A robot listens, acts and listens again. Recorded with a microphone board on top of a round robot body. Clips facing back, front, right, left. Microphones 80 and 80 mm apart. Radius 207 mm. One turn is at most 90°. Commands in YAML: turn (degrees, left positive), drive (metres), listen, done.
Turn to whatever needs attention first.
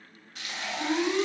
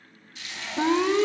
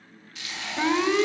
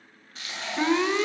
done: "Found it: an alarm, straight ahead."